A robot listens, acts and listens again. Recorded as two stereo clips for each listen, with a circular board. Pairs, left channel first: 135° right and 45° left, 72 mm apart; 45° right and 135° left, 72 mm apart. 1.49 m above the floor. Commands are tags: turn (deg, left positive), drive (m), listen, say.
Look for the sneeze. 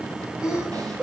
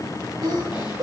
<turn deg="125"/>
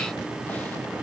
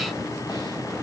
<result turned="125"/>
<say>I heard a sneeze from this way, but can't make it out now.</say>